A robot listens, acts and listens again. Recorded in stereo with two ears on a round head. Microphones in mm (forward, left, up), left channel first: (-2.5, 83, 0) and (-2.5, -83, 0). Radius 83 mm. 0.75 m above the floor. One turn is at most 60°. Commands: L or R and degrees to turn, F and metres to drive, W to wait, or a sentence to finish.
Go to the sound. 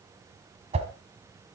R35
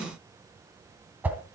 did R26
R10
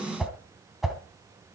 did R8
F1.0
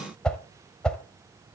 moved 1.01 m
F1.0
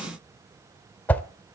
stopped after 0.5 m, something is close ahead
L10
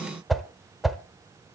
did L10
I am next to the whoosh.